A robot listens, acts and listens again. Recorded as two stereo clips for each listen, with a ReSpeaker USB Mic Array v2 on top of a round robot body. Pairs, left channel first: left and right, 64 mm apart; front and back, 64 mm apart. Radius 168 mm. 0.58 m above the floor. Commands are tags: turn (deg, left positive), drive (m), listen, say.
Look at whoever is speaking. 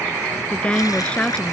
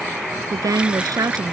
<turn deg="160"/>
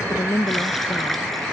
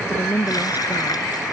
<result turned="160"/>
<turn deg="55"/>
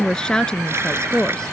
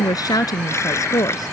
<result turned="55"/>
<turn deg="15"/>
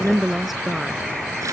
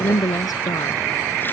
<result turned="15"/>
<say>Found it: a woman speaking, straight ahead.</say>